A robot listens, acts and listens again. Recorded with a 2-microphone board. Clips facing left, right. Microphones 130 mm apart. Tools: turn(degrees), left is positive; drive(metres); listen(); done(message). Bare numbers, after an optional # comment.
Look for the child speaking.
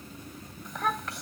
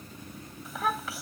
turn(-30)
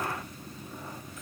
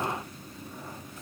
listen()
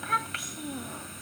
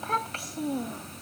# So it is at 145° right.
turn(-145)
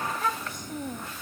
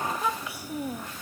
# The child speaking is now 10° right.
turn(-10)
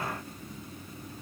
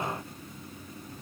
listen()
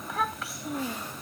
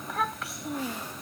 done("Facing the child speaking.")